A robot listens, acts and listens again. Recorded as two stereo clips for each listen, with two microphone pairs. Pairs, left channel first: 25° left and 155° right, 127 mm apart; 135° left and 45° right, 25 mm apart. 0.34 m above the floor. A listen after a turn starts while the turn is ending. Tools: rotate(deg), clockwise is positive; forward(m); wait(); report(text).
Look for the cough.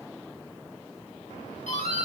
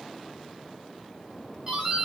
wait()
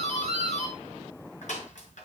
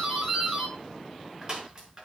wait()
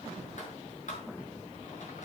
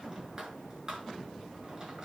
report("I can't make out a cough to turn to.")